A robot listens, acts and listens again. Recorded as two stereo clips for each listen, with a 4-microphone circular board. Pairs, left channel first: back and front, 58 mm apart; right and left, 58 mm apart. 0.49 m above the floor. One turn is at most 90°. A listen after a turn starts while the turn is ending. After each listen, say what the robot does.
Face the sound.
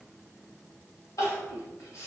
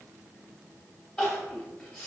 Turn 90° right.
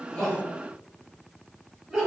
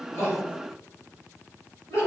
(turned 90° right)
Turn 70° right.
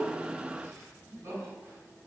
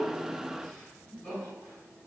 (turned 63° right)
Turn 10° right.
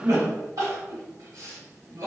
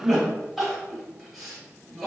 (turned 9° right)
Facing the crying.